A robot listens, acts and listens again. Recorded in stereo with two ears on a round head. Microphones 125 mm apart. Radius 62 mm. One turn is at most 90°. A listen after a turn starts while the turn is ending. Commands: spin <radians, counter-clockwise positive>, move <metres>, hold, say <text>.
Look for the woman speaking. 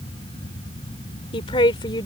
spin 0.61
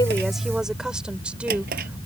spin -0.17
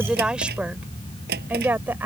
spin -0.26
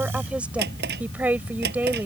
spin -0.17
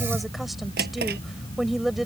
say Found it: a woman speaking, straight ahead.